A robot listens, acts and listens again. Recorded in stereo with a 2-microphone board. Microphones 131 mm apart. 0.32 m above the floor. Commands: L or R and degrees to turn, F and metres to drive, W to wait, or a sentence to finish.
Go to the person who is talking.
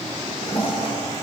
W
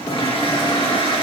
W
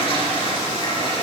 I can't make out anyone speaking to turn to.